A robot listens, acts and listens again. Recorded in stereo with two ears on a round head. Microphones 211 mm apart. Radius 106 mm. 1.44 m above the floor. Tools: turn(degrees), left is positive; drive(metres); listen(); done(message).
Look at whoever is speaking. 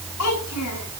turn(degrees=90)
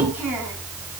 turn(degrees=-10)
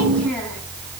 listen()
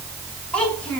done("Facing the child speaking, over 4 m away.")